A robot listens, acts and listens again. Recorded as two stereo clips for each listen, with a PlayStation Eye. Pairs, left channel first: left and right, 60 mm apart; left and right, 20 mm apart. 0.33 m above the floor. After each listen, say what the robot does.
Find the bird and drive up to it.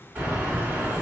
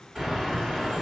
Turn 25° right.
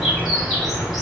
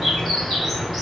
Drive 1.0 m forward.
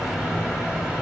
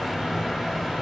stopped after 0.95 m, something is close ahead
Turn 10° right.
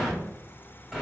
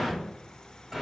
I am next to the bird.